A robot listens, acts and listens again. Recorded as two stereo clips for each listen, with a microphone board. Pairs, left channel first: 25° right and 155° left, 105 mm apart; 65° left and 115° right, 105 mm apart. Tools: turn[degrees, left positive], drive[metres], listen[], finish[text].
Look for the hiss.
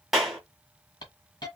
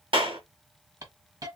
Thought: The hiss: 65° right.
Action: turn[-65]
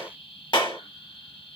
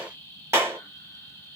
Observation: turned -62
Action: finish[Facing the hiss.]